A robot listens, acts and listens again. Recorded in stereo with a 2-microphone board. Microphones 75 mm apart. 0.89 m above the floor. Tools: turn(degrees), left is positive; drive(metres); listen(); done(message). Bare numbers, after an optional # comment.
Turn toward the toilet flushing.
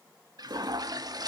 # The toilet flushing: about 55° right or 125° right.
turn(-55)
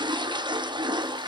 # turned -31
# So it is at 90° right.
turn(-90)
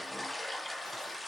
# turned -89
done("Facing the toilet flushing, 1 to 2 m away.")